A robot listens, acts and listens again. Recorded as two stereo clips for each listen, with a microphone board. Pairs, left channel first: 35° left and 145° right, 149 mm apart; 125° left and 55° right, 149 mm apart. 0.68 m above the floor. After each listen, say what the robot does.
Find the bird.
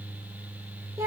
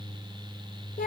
Keep listening.
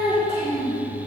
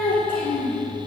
Keep listening.
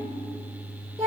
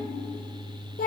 I can't make out a bird to turn to.